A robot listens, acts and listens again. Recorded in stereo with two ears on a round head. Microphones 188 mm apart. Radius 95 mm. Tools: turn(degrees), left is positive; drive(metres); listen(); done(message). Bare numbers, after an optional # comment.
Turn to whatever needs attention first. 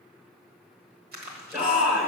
turn(-30)
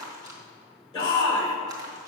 # So it is at 25° left.
turn(25)
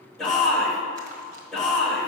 done("Facing the shout.")